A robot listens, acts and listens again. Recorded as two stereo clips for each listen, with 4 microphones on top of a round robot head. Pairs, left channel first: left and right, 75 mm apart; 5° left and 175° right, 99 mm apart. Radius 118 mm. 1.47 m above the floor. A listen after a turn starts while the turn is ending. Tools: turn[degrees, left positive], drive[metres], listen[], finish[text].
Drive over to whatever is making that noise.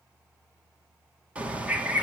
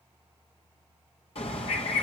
Thought: The bird: 15° right.
Action: turn[-15]
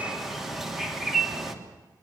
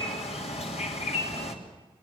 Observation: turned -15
Action: drive[1.0]
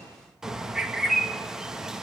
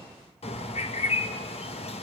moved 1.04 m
Action: drive[1.0]
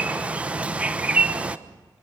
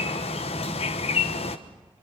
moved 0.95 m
Thought: The bird is now 15° right.
Action: turn[-15]
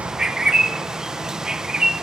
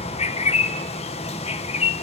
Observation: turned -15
Thought: The bird is now 10° right.
Action: turn[-10]
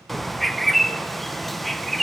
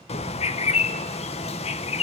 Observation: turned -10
Action: drive[1.0]
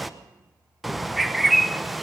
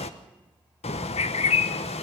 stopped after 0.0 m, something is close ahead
Action: finish[I am next to the bird.]